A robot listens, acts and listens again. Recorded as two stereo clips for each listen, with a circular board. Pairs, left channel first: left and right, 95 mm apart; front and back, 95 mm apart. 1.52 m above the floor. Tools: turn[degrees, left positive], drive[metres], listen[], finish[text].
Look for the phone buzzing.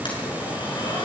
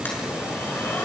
Action: listen[]
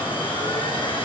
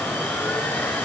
Action: listen[]
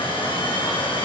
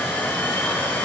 Action: finish[I can't make out a phone buzzing, only a blender.]